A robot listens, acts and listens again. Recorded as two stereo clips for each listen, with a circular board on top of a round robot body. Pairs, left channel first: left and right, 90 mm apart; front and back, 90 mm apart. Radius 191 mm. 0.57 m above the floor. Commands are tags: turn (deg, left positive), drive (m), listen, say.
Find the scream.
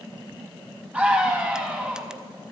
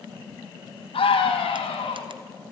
<turn deg="-15"/>
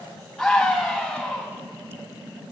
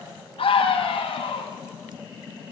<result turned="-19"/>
<say>Found it: a scream, straight ahead, over 4 m away.</say>